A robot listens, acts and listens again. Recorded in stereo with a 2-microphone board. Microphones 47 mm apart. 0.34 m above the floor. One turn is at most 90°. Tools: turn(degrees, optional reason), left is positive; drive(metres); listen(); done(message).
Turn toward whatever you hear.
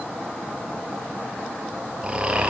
turn(degrees=-25, reason="The snoring: about 25° right or 155° right.")
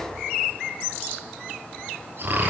turn(degrees=-90, reason="So it is at 130° right.")
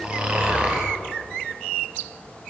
turn(degrees=-25, reason="The snoring is now 25° right.")
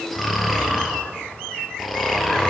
done("Facing the snoring.")